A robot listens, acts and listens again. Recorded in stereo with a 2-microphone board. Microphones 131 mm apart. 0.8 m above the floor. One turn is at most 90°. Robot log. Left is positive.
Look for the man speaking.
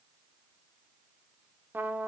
cmd idle
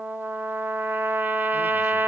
cmd idle
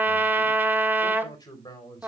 note: The man speaking: about 30° left or 150° left.
cmd yaw +30
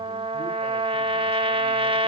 cmd idle
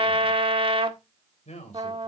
note: So it is at 120° left.
cmd yaw +90
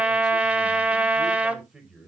end: Found it: a man speaking, straight ahead.